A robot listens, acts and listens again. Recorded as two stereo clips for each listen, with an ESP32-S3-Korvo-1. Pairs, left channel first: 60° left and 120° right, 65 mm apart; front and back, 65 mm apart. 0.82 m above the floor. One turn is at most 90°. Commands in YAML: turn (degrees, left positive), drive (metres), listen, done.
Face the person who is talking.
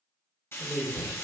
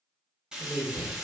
turn: -90
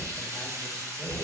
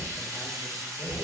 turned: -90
turn: -35
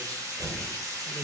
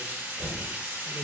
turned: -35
listen: true
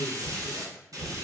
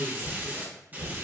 turn: 10
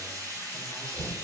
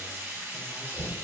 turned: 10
listen: true
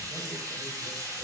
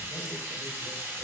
listen: true
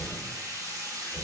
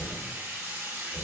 done: "Facing where the man speaking came from. I can't hear it now."